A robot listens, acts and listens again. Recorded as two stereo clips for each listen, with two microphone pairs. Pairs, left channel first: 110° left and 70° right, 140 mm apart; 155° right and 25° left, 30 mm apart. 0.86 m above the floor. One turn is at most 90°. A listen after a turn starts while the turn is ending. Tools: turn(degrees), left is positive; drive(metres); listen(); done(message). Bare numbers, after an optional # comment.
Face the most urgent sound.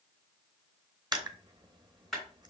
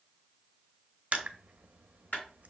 listen()
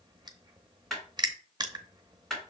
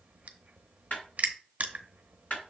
listen()
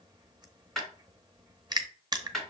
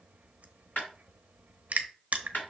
done("I can't make out anything urgent to turn to.")